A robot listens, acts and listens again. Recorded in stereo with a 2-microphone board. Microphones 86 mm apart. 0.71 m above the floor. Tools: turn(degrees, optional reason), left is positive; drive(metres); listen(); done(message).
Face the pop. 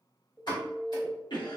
turn(degrees=65, reason="The pop: about 65° left or 115° left.")
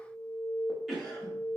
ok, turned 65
listen()
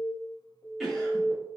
done("I heard a pop, but can't make it out now. It was about straight ahead or 50° left.")